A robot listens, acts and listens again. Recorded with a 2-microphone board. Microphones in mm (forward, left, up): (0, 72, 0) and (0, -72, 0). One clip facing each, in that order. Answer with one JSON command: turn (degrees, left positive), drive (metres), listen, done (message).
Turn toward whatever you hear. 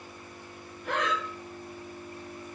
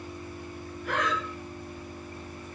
{"turn": 20}
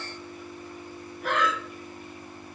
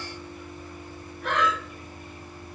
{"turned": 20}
{"done": "Facing the breathing, under 1 m away."}